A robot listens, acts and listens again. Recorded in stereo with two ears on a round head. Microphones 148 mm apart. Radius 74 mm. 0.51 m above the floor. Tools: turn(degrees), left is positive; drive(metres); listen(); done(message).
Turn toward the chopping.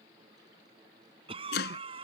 turn(degrees=65)
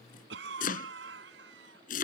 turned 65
turn(degrees=50)
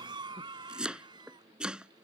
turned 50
done("Facing the chopping.")